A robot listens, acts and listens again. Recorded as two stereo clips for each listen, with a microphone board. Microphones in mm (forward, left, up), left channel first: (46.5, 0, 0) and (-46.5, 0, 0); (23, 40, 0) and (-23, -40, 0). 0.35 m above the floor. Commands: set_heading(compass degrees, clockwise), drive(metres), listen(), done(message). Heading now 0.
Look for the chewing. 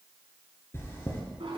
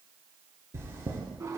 set_heading(60)
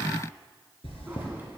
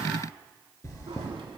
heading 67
done("Found it: chewing, straight ahead, 1 to 2 m away.")